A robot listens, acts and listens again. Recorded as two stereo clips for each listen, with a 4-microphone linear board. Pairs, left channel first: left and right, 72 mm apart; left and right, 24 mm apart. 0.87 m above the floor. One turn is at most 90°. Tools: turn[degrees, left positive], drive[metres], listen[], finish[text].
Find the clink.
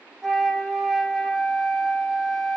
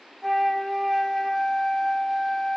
Action: listen[]
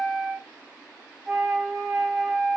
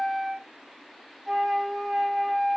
Action: listen[]
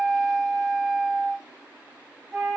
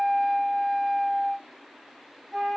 Action: finish[I can't make out a clink to turn to.]